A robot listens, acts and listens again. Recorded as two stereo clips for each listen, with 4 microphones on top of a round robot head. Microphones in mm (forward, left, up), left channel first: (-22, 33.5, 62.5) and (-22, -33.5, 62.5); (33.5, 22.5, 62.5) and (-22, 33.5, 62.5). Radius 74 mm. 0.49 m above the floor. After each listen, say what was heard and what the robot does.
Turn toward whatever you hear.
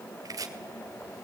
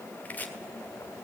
The chopping: 70° right. Turn 70° right.
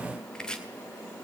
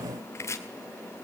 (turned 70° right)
The chopping is now 10° left. Turn 10° left.
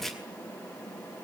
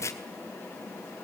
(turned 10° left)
Facing the chopping.